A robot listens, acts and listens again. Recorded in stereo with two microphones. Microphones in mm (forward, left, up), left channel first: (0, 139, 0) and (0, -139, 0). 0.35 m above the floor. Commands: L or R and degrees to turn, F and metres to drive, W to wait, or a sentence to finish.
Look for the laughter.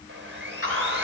L50
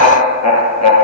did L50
L75
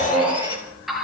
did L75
Facing the laughter, over 4 m away.